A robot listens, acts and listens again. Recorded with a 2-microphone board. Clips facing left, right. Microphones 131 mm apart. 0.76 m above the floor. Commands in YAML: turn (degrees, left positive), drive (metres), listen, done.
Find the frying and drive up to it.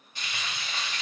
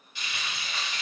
turn: 45
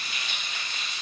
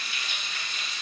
turn: 90
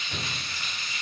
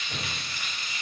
turn: -20
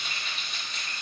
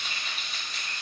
drive: 1.0
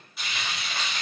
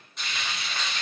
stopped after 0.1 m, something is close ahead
done: "Blocked. The frying is further on, straight ahead."